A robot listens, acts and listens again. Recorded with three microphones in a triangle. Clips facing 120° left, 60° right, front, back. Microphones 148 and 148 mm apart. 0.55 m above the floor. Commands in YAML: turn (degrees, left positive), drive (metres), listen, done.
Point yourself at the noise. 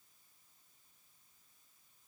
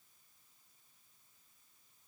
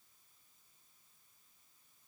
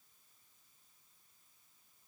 listen: true
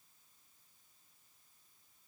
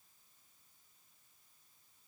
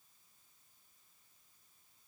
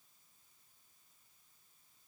listen: true
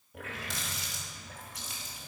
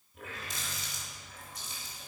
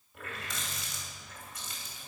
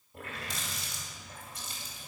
turn: 120
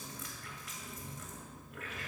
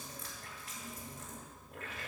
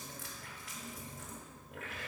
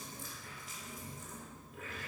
done: "Found it: a running tap, straight ahead, 2 to 4 m away."